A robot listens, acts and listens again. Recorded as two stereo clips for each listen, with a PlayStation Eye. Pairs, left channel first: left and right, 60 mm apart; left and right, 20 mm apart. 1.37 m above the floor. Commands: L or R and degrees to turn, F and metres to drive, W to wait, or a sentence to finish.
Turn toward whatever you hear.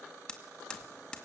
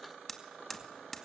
L30
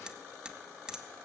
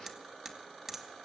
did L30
R15
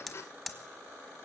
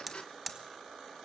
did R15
Found it: hammering, straight ahead, 2 to 4 m away.